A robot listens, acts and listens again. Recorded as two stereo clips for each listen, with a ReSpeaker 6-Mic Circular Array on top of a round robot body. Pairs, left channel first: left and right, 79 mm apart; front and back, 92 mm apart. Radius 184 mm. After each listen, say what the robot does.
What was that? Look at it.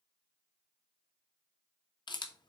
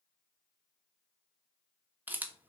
Turn 110° left.
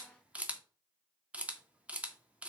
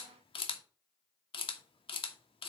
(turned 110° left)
Turn 15° right.
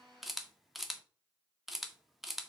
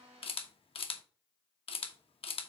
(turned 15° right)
Found it: a camera shutter, straight ahead.